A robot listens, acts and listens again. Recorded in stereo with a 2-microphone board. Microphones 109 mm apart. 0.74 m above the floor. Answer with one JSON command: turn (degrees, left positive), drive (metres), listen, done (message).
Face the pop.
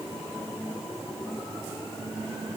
{"listen": true}
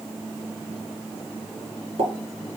{"turn": -65}
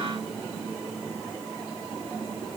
{"listen": true}
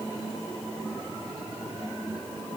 {"done": "I heard a pop, but can't make it out now. It was about straight ahead or 50° right."}